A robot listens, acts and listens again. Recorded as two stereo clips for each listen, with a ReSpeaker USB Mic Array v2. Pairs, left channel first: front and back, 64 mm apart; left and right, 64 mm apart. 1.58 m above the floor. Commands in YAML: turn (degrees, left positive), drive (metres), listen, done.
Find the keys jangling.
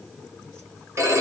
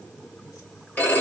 listen: true
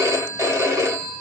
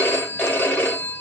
listen: true
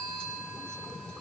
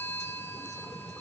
done: "I can't make out keys jangling, only a phone ringing."